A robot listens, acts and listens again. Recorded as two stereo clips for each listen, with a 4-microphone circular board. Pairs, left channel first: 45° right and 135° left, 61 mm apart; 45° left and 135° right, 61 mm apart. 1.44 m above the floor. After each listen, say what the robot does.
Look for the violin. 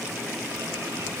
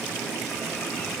Keep listening.
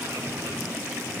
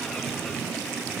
Keep listening.
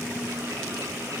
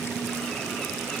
I can't make out a violin.